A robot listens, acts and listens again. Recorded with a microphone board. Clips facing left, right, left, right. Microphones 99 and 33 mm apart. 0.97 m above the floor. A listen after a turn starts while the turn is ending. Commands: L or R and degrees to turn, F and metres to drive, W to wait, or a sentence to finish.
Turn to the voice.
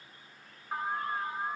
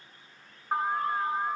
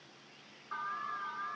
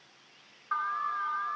W
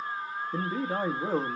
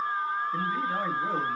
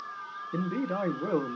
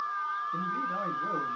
L40
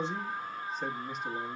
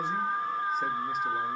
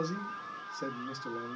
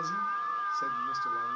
W
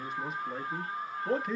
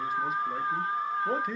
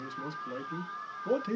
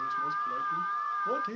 Found it: a man speaking, straight ahead.